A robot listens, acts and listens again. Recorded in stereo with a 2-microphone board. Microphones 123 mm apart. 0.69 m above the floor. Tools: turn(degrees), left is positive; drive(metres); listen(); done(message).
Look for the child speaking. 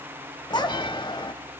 turn(degrees=40)
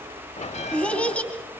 turn(degrees=10)
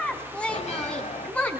turn(degrees=10)
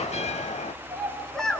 done("Found it: a child speaking, straight ahead, over 4 m away.")